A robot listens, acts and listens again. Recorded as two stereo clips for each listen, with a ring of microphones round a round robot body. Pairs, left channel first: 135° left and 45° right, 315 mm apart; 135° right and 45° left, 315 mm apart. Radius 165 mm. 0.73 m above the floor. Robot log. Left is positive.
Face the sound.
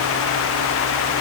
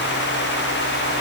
cmd idle
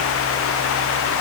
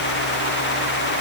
cmd idle
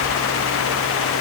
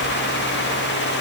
end: I can't make out anything.